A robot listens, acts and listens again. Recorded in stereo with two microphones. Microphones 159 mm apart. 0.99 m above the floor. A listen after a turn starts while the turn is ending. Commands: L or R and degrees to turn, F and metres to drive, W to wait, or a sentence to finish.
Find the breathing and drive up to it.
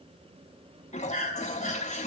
L50
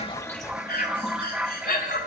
L80
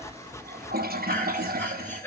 L15
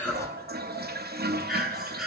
F1.0
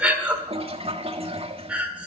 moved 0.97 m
R10
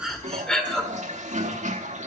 F1.0
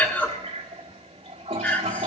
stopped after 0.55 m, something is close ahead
L10
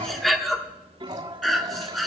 Arrived at the breathing, straight ahead.